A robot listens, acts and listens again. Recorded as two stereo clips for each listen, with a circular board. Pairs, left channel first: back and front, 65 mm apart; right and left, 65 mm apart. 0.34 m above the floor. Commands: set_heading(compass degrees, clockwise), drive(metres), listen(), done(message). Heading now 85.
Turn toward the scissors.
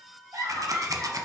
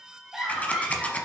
set_heading(110)
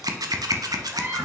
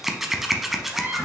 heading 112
done("Facing the scissors.")